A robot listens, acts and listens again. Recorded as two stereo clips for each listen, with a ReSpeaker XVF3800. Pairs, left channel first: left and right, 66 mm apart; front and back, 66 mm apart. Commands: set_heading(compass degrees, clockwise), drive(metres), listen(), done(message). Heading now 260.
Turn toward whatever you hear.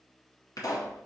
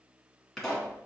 set_heading(175)
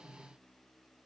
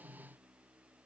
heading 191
set_heading(176)
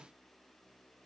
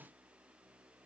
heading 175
done("I heard a pop from this way, but can't make it out now.")